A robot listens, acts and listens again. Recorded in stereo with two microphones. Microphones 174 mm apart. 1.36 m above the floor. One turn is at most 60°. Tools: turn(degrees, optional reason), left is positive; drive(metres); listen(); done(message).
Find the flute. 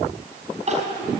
listen()
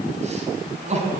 listen()
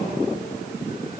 done("I can't make out a flute to turn to.")